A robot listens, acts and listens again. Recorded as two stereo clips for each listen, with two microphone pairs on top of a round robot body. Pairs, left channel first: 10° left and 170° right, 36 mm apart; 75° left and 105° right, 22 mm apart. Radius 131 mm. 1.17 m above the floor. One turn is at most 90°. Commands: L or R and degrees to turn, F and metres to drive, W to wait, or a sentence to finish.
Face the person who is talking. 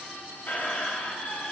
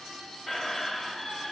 W
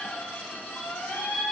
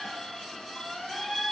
W
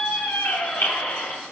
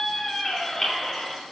I can't make out anyone speaking, only a squeak.